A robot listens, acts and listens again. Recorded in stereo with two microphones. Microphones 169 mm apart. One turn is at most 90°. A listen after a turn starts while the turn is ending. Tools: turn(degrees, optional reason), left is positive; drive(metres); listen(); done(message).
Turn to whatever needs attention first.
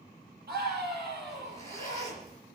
turn(degrees=-70, reason="The scream: about 70° right or 110° right.")
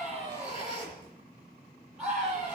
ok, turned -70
done("Facing the scream.")